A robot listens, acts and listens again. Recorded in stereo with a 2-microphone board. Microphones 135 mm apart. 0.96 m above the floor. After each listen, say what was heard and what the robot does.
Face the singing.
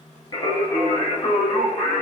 The singing: about 55° left or 125° left. Turn 55° left.
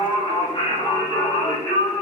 So it is at 25° left. Turn 25° left.
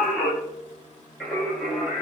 Facing the singing.